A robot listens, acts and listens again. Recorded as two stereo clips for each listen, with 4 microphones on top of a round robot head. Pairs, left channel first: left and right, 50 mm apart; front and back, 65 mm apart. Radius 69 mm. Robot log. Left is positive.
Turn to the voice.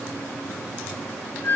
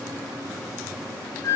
cmd idle
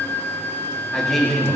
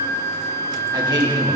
note: The man speaking: 170° left.
cmd yaw +170
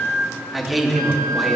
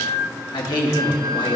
end: Found it: a man speaking, straight ahead, 2 to 4 m away.